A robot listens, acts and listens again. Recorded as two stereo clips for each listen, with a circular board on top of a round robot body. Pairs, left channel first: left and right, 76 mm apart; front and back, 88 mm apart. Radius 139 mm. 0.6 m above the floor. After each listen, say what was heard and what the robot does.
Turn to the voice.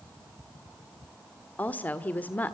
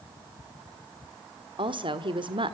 The woman speaking: 160° left. Turn 160° left.
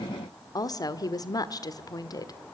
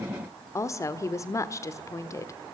The woman speaking is now 55° left. Turn 55° left.
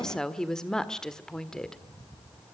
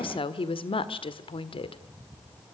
The woman speaking is now 10° left. Turn 10° left.
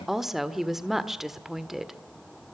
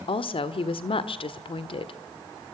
Facing the woman speaking.